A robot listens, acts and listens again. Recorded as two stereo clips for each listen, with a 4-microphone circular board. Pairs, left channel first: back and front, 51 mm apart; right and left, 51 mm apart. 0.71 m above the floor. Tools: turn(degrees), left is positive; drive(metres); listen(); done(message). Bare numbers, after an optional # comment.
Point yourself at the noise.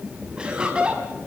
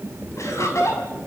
# The laughter: 70° right.
turn(-70)
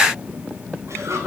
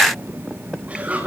# The laughter is now 25° left.
turn(25)
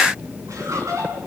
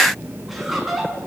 done("Facing the laughter, over 4 m away.")